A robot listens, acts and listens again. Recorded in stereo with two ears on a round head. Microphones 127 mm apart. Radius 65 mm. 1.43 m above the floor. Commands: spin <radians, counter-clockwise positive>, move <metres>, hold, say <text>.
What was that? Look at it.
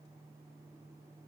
hold
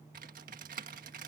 spin -1.05
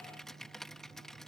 say Facing the typing on a keyboard.